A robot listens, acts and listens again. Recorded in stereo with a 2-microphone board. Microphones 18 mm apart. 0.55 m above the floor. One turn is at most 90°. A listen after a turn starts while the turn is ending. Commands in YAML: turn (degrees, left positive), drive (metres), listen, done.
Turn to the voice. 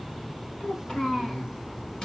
turn: 70
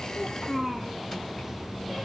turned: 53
turn: 50
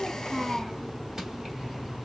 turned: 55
done: "Found it: a child speaking, straight ahead, 2 to 4 m away."